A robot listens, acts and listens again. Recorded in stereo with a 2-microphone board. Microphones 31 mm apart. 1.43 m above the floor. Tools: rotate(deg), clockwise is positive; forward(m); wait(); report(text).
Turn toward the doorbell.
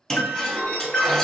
rotate(-55)
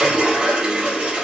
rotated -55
wait()
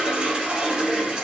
wait()
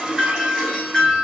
report("Facing the doorbell.")